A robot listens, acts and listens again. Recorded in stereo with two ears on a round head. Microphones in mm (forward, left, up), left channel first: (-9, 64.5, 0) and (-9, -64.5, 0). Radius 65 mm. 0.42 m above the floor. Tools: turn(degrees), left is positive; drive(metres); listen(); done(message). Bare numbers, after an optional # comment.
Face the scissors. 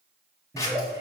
# The scissors: about 20° left or 160° left.
turn(20)
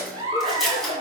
done("Facing the scissors.")